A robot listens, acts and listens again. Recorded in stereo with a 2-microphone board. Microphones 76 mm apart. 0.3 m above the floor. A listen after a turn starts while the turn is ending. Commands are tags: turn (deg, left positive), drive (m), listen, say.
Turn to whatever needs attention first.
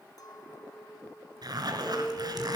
<turn deg="30"/>
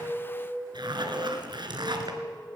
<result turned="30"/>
<turn deg="120"/>
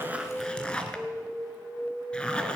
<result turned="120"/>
<turn deg="20"/>
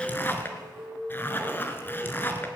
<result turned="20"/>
<say>Found it: an alarm, straight ahead, over 4 m away.</say>